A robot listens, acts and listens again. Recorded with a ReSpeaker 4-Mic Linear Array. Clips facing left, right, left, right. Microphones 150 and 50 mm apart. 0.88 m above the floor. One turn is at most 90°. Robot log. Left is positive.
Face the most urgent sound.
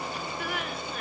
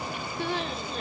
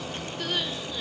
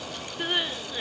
note: The crying: about 25° right or 155° right.
cmd yaw -25
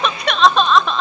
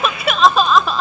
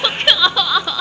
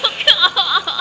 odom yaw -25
end: Facing the crying.